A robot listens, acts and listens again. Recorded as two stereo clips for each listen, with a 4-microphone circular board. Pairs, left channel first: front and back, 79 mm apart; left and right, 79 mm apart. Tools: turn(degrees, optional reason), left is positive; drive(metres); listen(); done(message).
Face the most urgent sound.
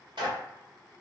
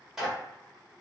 listen()
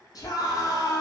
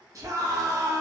turn(degrees=-40, reason="The scream: 40° right.")
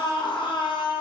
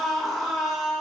done("Facing the scream.")